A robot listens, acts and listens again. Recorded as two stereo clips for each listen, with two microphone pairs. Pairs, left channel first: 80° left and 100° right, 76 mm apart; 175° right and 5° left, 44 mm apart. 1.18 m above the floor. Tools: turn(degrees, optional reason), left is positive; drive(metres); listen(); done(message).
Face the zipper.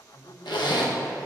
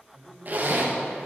turn(degrees=55, reason="The zipper: 55° left.")
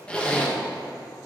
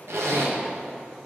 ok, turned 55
done("Found it: a zipper, straight ahead, under 1 m away.")